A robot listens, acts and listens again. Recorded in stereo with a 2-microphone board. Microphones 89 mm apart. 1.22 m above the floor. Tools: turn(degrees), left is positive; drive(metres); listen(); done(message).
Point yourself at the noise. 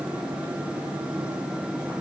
listen()
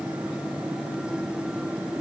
listen()
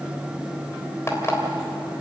turn(degrees=30)
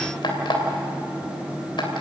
turn(degrees=120)
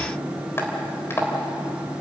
turn(degrees=30)
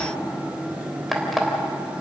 done("Found it: an alarm clock, straight ahead.")